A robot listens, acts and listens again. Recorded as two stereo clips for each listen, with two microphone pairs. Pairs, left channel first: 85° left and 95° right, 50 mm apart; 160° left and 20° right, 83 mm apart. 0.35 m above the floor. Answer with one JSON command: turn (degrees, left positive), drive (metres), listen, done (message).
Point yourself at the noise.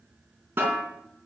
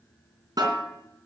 {"turn": -55}
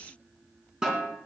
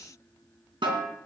{"turn": -20}
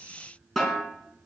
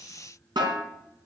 {"done": "Facing the snare drum."}